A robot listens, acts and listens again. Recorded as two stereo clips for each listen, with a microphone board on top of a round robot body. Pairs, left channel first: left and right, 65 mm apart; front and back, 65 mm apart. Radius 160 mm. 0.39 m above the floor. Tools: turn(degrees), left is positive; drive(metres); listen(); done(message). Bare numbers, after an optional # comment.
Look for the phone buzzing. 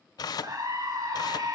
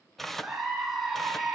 listen()
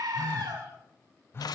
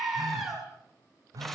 # The phone buzzing: 145° left.
turn(145)
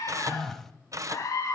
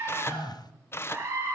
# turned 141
done("Facing the phone buzzing.")